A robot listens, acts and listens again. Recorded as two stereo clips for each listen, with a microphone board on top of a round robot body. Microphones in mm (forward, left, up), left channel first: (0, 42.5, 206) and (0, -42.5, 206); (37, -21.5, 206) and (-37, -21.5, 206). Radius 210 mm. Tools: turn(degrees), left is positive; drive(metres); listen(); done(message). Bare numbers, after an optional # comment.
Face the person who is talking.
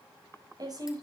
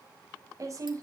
# The woman speaking: 135° right.
turn(-135)
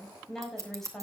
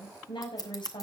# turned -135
done("Facing the woman speaking, over 4 m away.")